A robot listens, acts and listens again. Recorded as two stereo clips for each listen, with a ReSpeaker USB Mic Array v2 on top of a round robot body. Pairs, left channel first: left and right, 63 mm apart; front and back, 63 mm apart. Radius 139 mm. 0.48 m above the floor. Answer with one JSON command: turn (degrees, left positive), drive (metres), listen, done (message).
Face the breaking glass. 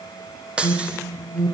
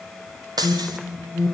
{"turn": -165}
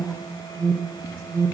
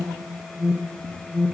{"done": "Facing where the breaking glass came from. I can't hear it now."}